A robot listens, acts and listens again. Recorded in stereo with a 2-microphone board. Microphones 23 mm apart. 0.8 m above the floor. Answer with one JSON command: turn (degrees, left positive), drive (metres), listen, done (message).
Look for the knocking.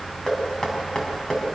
{"turn": 35}
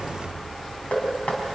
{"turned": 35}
{"turn": 110}
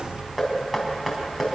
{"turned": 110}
{"turn": -10}
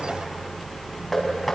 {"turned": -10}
{"done": "Found it: knocking, straight ahead."}